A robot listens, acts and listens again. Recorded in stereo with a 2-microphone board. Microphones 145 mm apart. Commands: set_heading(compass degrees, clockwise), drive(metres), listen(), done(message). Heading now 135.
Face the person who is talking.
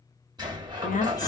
set_heading(70)
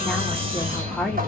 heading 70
done("Found it: a woman speaking, straight ahead.")